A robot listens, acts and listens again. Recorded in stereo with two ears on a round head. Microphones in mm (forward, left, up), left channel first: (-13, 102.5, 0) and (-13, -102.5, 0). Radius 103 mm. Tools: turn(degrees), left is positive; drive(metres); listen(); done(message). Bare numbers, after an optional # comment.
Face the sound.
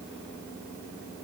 listen()
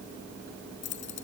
# The keys jangling: about 55° left or 125° left.
turn(55)
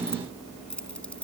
done("Found it: keys jangling, straight ahead.")